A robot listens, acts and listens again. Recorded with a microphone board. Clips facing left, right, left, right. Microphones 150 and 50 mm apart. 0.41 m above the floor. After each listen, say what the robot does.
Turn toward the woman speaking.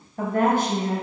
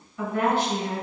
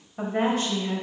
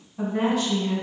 Turn 40° left.
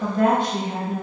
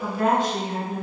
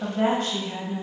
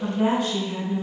Turn 120° left.
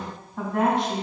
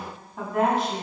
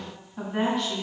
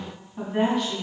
Found it: a woman speaking, straight ahead.